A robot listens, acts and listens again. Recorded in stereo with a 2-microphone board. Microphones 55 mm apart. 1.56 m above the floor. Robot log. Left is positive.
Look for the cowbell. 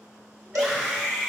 note: The cowbell: about 75° right or 105° right.
cmd yaw -75
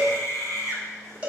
note: So it is at 20° right.
cmd yaw -20
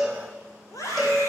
end: Facing the cowbell.